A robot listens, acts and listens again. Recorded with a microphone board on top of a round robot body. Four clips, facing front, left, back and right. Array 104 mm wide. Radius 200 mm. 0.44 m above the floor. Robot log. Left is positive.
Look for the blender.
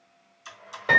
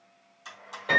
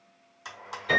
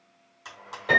note: The blender: 155° right.
cmd yaw -155
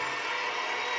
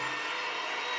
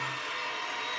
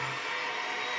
end: Facing the blender.